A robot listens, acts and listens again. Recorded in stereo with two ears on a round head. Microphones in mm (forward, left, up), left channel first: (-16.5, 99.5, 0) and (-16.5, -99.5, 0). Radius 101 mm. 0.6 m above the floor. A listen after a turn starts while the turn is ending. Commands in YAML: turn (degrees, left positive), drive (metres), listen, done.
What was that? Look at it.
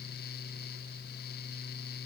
listen: true
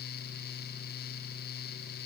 listen: true
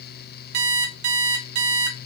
turn: -90
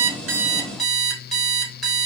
done: "Facing the alarm clock."